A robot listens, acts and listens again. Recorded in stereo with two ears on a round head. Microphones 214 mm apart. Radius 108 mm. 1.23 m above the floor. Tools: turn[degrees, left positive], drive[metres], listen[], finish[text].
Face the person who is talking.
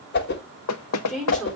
Action: turn[30]
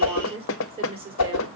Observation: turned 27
Thought: So it is at 25° right.
Action: turn[-25]
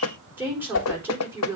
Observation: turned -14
Thought: The woman speaking is now 10° right.
Action: turn[-10]
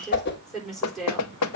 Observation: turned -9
Action: finish[Facing the woman speaking.]